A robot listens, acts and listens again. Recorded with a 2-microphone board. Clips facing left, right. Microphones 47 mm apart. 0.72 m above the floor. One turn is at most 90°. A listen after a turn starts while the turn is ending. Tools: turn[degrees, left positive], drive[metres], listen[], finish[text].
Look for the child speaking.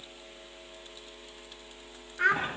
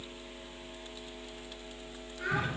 Thought: The child speaking: about 60° left or 120° left.
Action: turn[60]
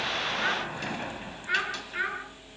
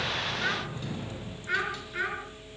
Action: finish[Facing the child speaking.]